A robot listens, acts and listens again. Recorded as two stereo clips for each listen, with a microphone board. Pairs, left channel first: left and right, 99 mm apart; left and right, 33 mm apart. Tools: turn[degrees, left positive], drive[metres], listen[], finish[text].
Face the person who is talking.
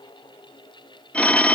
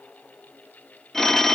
Action: listen[]
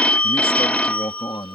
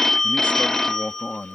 Thought: The man speaking: about 55° left or 125° left.
Action: turn[55]
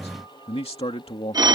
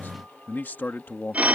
Thought: So it is at 75° left.
Action: turn[75]
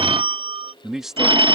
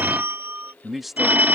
Action: finish[Found it: a man speaking, straight ahead.]